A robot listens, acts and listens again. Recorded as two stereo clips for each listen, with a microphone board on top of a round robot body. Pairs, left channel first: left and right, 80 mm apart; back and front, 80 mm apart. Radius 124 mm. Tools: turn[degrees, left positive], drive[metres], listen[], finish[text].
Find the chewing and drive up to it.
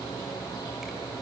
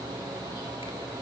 Action: listen[]
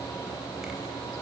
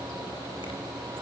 Action: listen[]
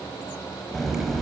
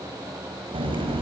Action: drive[1.0]
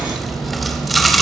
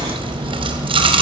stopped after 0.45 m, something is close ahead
Action: finish[Something is in my way. I am facing the chewing but have not reached it.]